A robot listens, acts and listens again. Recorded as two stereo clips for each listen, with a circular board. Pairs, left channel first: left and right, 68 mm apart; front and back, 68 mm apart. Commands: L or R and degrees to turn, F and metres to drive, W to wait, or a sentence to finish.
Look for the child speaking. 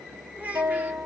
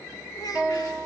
R20
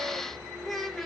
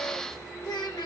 Found it: a child speaking, straight ahead, 1 to 2 m away.